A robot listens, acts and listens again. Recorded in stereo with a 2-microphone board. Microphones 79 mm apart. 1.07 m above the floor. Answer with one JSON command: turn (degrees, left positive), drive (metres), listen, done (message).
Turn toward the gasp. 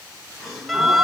{"turn": -30}
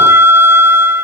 {"listen": true}
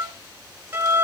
{"done": "I heard a gasp, but can't make it out now. It was about 25° left or 145° right."}